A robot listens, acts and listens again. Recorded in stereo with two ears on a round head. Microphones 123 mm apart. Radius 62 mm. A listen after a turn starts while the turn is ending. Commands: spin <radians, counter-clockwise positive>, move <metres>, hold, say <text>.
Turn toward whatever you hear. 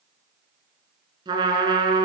spin -0.61
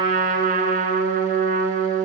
spin -1.92
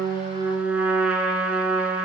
spin -0.17
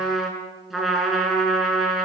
say Facing the trumpet, over 4 m away.